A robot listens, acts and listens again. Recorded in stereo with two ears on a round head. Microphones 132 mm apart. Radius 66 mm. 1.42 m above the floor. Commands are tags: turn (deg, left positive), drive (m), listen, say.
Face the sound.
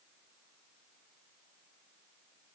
<listen/>
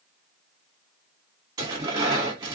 <turn deg="-25"/>
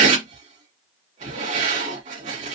<turn deg="-130"/>
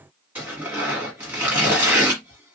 <turn deg="-10"/>
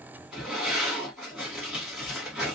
<say>Found it: tearing paper, straight ahead, 2 to 4 m away.</say>